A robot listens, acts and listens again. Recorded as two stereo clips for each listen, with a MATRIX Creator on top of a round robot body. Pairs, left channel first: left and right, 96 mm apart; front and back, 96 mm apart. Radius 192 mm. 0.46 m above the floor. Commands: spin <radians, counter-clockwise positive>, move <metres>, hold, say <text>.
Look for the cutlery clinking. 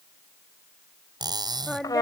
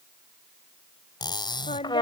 spin -0.79
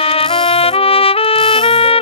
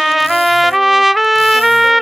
hold
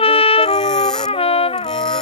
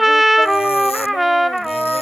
hold
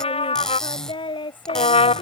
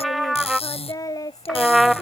say Found it: cutlery clinking, straight ahead.